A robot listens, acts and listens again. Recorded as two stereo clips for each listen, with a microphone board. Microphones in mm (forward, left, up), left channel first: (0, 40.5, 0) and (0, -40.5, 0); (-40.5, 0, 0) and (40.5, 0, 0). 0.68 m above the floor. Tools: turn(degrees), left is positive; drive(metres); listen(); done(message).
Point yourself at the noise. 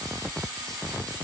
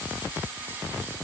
listen()
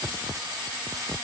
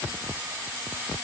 listen()
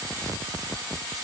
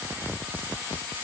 done("I can't make out anything to turn to.")